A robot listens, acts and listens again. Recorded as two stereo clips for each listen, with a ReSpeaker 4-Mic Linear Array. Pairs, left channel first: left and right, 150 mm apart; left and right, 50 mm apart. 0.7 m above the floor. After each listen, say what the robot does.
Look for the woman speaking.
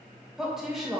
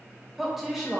Turn 30° left.
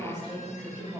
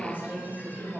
Turn 25° right.
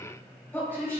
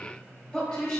Turn 15° left.
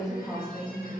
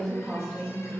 Found it: a woman speaking, straight ahead.